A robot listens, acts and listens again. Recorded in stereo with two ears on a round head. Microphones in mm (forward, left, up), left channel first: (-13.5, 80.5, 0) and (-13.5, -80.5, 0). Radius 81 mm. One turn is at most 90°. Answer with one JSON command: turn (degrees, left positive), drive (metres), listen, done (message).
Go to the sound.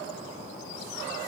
{"listen": true}
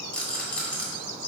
{"turn": 30}
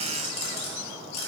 {"turn": 90}
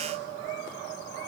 {"turn": 50}
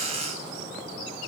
{"listen": true}
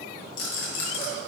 {"turn": 60}
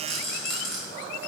{"drive": 1.0}
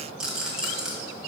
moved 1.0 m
{"drive": 1.0}
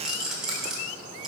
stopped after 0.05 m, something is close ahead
{"done": "Arrived at the rattle, straight ahead."}